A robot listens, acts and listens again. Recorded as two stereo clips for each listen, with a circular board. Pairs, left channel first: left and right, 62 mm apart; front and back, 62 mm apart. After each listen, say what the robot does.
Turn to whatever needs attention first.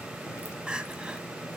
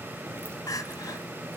Turn 15° right.
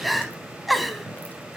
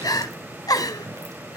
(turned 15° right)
Found it: crying, straight ahead.